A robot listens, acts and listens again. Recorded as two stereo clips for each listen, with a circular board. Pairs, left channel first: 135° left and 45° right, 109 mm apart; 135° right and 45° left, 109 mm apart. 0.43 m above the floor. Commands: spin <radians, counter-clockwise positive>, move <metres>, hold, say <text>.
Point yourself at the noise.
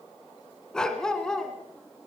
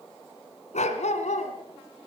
spin -2.44
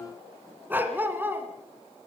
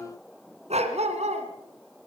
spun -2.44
spin 0.52
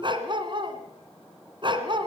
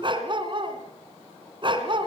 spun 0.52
say Facing the dog barking, 2 to 4 m away.